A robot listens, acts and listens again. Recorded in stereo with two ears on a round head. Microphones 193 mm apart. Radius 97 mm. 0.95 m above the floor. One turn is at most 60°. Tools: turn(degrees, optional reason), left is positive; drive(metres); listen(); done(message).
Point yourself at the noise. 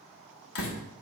turn(degrees=60, reason="The door slam: about 70° left or 110° left.")
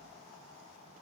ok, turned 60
listen()
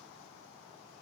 done("I heard a door slam, but can't make it out now. It was about 10° left or 50° left.")